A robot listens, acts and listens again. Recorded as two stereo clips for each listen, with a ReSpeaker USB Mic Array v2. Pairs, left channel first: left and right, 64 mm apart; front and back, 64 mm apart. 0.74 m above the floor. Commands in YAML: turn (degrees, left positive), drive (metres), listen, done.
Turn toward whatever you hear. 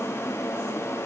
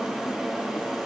listen: true
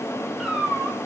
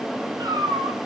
turn: -175
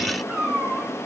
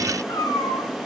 turn: -15
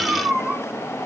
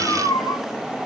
done: "Found it: a cat meowing, straight ahead, 2 to 4 m away."